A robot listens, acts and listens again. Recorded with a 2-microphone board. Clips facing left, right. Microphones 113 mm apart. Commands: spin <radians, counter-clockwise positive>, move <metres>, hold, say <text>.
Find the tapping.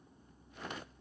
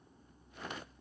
hold
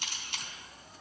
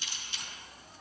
hold
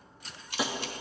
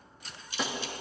spin 0.52
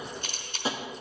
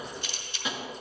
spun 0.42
spin 2.53
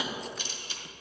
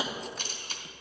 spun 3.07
spin -0.52
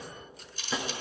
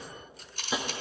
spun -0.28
spin -0.26
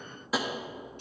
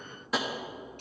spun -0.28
say Found it: tapping, straight ahead, under 1 m away.